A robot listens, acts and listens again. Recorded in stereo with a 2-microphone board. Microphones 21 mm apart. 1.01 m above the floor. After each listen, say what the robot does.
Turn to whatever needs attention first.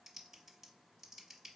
Keep listening.
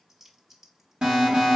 Turn 50° right.
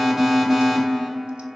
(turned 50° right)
Turn 10° right.
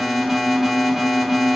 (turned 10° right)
Found it: an alarm, straight ahead.